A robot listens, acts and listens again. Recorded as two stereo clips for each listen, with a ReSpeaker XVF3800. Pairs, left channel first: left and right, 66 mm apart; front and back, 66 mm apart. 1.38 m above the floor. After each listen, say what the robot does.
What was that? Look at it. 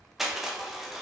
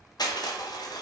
Facing the crushing.